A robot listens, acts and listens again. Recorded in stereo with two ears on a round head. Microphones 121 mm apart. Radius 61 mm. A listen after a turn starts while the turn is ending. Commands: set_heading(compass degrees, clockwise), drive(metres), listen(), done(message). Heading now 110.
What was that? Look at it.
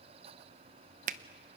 set_heading(175)
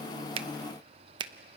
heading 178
set_heading(218)
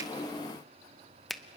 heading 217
done("Facing the finger snap.")